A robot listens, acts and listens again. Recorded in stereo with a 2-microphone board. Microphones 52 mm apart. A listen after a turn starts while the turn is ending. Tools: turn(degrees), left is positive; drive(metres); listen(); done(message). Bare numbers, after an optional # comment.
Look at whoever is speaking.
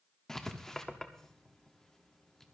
listen()
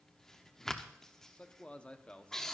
# The man speaking: about 25° left or 155° left.
turn(25)
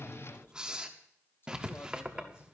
listen()
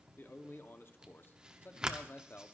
# So it is at 130° left.
turn(130)
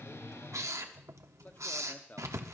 # The man speaking is now 35° left.
turn(35)
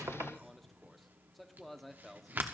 done("Found it: a man speaking, straight ahead.")